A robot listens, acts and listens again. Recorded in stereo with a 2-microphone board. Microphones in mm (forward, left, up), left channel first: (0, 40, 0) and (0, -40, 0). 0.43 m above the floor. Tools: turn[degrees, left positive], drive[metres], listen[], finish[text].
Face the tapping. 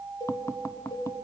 Thought: The tapping: about 40° left or 140° left.
Action: turn[40]
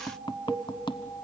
Thought: So it is at 100° left.
Action: turn[100]
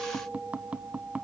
Thought: The tapping is now 15° right.
Action: turn[-15]
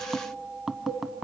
Action: finish[Facing the tapping, under 1 m away.]